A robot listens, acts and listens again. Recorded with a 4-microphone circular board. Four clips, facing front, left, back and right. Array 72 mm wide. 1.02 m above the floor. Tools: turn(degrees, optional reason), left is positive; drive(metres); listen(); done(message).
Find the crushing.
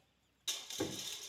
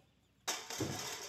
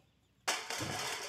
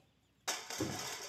turn(degrees=180, reason="The crushing: straight behind.")
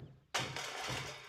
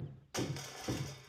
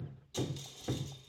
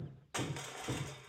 turn(degrees=-20, reason="The crushing is now 20° right.")
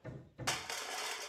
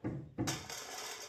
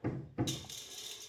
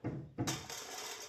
done("Found it: crushing, straight ahead, under 1 m away.")